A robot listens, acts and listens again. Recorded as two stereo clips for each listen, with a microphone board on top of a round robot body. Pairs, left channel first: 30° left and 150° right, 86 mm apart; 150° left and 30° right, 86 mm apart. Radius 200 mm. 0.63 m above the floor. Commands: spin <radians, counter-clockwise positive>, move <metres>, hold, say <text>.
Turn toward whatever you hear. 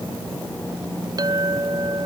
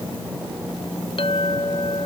spin 2.88
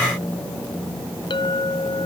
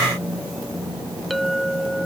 spin 1.05
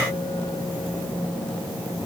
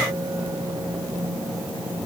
hold
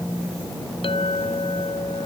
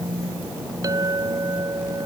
spin 0.35
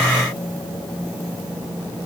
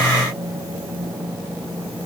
hold
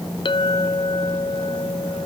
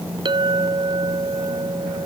say Found it: a clink, straight ahead.